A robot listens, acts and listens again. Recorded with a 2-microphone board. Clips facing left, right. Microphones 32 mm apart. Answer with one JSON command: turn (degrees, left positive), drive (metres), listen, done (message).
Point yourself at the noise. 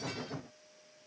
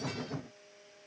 {"listen": true}
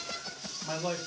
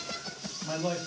{"turn": 30}
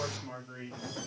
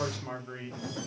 {"turn": -50}
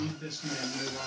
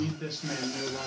{"turn": -35}
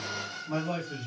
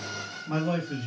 {"turn": -30}
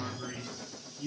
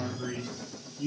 {"turn": -15}
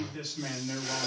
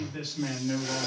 {"done": "Facing the man speaking, 2 to 4 m away."}